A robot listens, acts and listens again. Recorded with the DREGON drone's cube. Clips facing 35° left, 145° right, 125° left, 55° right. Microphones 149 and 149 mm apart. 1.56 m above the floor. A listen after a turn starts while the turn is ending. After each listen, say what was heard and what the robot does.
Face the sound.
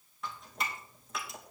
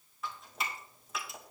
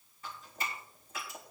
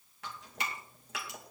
The dripping: 55° right. Turn 55° right.
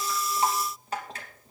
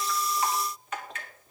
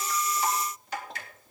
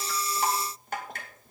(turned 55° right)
The dripping is now 20° right. Turn 20° right.
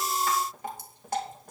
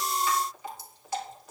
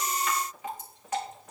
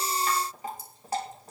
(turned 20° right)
Facing the dripping, 2 to 4 m away.